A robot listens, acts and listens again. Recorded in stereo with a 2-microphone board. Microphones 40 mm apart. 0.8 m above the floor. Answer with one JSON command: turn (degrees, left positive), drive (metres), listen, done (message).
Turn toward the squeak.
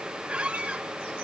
{"turn": -35}
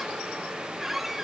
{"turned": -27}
{"turn": -10}
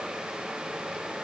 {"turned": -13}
{"listen": true}
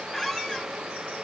{"done": "Facing the squeak, under 1 m away."}